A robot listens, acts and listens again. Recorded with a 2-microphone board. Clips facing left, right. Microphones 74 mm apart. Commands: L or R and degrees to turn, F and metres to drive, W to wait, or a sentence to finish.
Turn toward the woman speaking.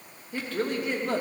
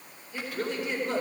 L50
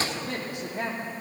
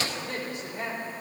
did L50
L75
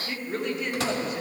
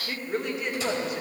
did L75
Facing the woman speaking.